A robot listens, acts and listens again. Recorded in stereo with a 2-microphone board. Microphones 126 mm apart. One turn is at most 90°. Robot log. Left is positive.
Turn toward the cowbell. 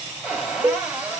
note: The cowbell: about 40° right or 140° right.
cmd yaw -40
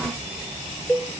note: So it is at 10° right.
cmd yaw -10
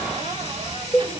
end: Found it: a cowbell, straight ahead, 2 to 4 m away.